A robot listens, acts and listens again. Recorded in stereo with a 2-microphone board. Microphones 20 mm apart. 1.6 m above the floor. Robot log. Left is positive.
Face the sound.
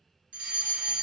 note: The fire alarm: about 55° right or 125° right.
cmd yaw -55
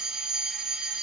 note: So it is at 15° right.
cmd yaw -15
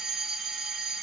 end: Found it: a fire alarm, straight ahead, 1 to 2 m away.